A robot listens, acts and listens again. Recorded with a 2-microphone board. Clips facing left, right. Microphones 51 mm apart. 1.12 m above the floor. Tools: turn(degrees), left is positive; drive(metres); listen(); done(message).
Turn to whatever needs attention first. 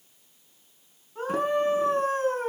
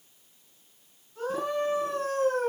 turn(degrees=40)
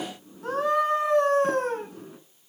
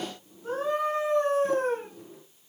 turn(degrees=100)
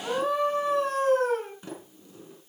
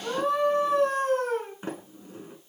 done("Found it: a scream, straight ahead.")